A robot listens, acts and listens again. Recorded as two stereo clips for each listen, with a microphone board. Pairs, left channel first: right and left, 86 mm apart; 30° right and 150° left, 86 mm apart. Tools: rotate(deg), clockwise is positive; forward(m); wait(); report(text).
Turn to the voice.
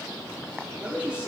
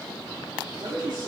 rotate(-160)
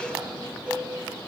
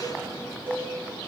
wait()
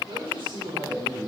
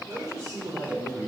rotate(-105)
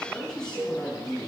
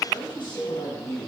report("Facing the man speaking.")